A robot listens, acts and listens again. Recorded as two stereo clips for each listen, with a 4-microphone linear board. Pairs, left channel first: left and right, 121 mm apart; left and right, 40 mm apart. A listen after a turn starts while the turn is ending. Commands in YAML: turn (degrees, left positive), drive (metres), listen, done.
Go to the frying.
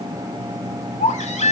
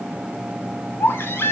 listen: true
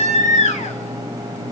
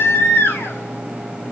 listen: true
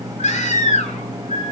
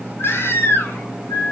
done: "I can't make out frying, only a baby crying."